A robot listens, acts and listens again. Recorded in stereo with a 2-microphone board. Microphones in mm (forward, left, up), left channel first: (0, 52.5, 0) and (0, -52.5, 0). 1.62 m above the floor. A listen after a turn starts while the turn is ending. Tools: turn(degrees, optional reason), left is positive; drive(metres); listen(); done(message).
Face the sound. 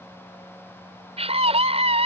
turn(degrees=-90)
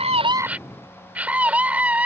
turn(degrees=-15, reason="So it is at 15° right.")
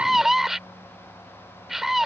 done("Facing the scream.")